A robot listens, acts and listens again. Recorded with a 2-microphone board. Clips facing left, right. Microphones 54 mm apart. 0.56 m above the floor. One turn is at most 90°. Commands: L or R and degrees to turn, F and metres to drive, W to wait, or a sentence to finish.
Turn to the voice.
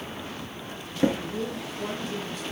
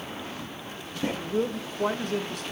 R60
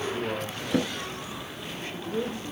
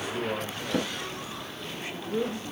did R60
R15
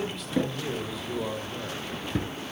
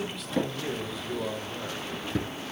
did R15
Facing the man speaking.